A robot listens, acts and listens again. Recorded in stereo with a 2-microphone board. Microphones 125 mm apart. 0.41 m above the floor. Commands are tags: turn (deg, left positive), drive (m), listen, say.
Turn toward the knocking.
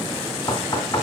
<turn deg="30"/>
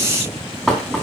<say>Facing the knocking.</say>